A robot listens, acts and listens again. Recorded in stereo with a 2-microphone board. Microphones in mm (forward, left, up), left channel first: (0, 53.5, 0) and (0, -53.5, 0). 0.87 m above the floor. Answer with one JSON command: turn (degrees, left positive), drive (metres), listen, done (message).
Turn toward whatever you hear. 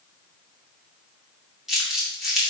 {"turn": -30}
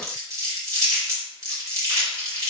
{"turn": -145}
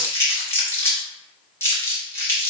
{"turn": 25}
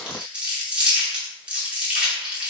{"turn": -10}
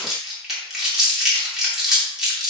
{"done": "Facing the crumpling."}